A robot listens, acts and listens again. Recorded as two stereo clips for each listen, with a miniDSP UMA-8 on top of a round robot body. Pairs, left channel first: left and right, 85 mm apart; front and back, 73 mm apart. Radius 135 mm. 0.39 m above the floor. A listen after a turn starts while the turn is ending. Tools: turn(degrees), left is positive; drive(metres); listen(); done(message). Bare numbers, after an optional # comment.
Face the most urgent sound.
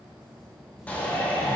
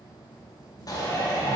# The shout: 20° left.
turn(20)
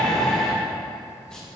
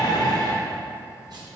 done("Facing the shout, 2 to 4 m away.")